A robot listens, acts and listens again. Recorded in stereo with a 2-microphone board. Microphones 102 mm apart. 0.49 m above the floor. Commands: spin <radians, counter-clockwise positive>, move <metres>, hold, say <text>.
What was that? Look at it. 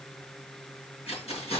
spin 1.57
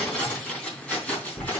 spin 0.26
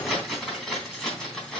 say Facing the keys jangling, 2 to 4 m away.